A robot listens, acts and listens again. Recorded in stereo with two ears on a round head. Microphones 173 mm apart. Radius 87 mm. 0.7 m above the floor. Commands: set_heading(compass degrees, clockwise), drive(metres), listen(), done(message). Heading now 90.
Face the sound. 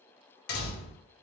set_heading(35)
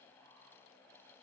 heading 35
listen()
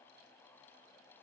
done("I heard a door slam, but can't make it out now. It was about straight ahead or 70° left.")